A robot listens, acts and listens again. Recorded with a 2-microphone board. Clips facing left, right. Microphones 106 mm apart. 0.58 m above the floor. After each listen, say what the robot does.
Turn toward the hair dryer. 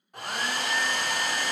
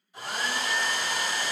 Turn 60° left.
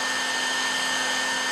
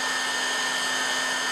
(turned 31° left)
Turn 80° left.
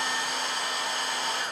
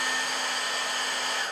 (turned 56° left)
Turn 25° left.
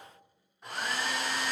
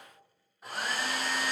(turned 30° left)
Found it: a hair dryer, straight ahead, under 1 m away.